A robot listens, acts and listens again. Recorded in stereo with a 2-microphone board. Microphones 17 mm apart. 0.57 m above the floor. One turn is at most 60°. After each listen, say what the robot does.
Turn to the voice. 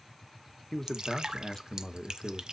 Turn 25° left.
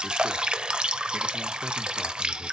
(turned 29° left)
Keep listening.
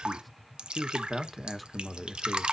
Facing the man speaking, 1 to 2 m away.